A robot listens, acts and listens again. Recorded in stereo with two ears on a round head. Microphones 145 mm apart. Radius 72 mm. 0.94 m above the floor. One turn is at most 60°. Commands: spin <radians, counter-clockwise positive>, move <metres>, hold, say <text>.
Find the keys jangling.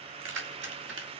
spin -1.05
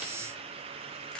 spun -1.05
spin -0.52
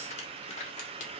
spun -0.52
spin 0.79
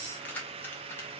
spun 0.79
spin 0.17
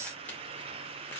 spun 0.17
hold
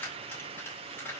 spin 0.17
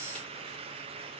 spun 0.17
hold
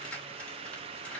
hold
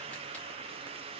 say Facing where the keys jangling came from. I can't hear it now.